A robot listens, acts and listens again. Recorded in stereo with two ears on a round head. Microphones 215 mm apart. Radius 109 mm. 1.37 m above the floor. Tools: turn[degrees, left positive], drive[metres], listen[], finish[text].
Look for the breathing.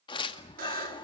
Thought: The breathing: about 20° left or 160° left.
Action: turn[20]
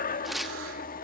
Thought: So it is at 135° left.
Action: turn[135]
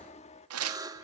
Thought: The breathing is now 30° left.
Action: turn[30]
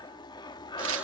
Thought: The breathing is now 20° left.
Action: turn[20]
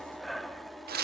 Action: finish[Found it: breathing, straight ahead.]